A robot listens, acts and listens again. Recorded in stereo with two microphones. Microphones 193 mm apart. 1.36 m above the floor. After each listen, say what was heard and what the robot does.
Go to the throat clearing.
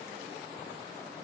Keep listening.
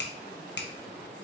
Keep listening.
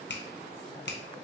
I can't make out throat clearing to turn to.